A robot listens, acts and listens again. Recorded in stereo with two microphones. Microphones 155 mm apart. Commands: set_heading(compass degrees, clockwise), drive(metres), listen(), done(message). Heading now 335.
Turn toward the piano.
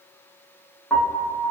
set_heading(305)
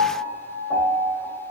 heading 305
set_heading(325)
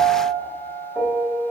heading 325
done("Found it: a piano, straight ahead, under 1 m away.")